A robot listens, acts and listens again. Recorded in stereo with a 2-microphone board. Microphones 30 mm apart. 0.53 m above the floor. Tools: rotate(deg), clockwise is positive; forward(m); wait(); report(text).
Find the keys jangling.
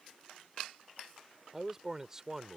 wait()
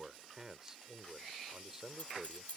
rotate(-50)
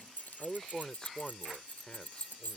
rotate(-80)
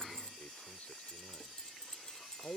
rotate(-20)
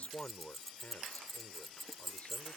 report("Found it: keys jangling, straight ahead.")